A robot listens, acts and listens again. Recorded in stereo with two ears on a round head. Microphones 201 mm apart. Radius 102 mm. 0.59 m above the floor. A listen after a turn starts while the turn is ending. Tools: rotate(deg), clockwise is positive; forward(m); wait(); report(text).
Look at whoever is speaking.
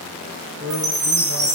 rotate(90)
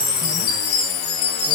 wait()
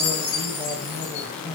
report("Found it: a man speaking, straight ahead.")